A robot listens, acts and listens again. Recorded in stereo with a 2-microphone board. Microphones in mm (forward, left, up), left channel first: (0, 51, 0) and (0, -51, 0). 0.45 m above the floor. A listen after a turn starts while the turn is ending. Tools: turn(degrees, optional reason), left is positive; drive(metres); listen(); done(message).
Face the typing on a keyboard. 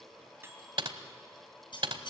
turn(degrees=-60, reason="The typing on a keyboard: about 60° right or 120° right.")
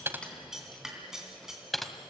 done("Facing the typing on a keyboard.")